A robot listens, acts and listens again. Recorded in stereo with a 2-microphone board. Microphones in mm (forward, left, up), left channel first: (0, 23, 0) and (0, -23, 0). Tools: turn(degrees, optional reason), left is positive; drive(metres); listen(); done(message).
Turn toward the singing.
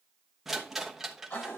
listen()
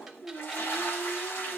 turn(degrees=40, reason="The singing: about 40° left or 140° left.")
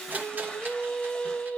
turn(degrees=20, reason="So it is at 20° left.")
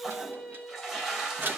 turn(degrees=15, reason="The singing is now 15° left.")
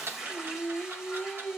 turn(degrees=20, reason="The singing is now 20° left.")
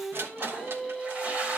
done("Facing the singing, 2 to 4 m away.")